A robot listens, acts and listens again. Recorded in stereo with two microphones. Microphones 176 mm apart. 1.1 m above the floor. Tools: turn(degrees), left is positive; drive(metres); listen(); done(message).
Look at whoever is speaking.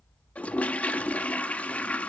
listen()
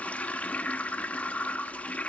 listen()
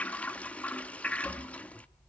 done("I can't make out anyone speaking to turn to.")